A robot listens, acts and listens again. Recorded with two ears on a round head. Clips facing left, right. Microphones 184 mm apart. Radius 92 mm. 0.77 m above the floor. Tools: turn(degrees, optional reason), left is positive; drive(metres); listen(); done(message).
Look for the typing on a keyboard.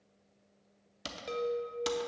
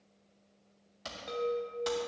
turn(degrees=40, reason="The typing on a keyboard: about 40° left or 140° left.")
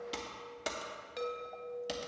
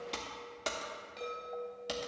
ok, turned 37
done("Facing the typing on a keyboard.")